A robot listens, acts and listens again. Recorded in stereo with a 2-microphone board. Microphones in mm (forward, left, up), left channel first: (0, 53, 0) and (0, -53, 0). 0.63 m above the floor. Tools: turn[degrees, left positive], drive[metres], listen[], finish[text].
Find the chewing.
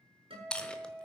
Action: turn[30]
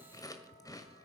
Thought: So it is at 145° left.
Action: turn[145]
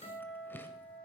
Action: listen[]
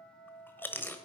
Thought: The chewing is now 20° left.
Action: turn[20]
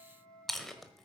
Action: finish[Facing the chewing, 1 to 2 m away.]